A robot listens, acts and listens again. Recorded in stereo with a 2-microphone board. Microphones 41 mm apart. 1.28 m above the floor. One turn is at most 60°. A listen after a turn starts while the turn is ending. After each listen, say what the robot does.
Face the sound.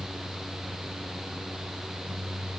Keep listening.
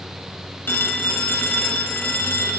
Turn 60° left.
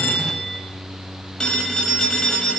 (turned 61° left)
Turn 20° left.
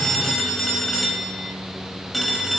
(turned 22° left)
Found it: a phone ringing, straight ahead, 1 to 2 m away.